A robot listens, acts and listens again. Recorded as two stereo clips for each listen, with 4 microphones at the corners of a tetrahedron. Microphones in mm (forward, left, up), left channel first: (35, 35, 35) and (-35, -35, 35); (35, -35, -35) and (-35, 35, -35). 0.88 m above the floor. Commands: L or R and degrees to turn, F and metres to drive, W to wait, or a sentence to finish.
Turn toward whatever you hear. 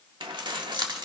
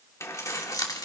R90
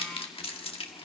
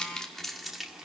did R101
L50
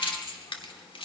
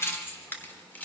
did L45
L25
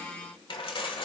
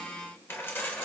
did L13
L25
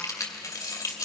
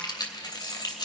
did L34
Facing the keys jangling, 2 to 4 m away.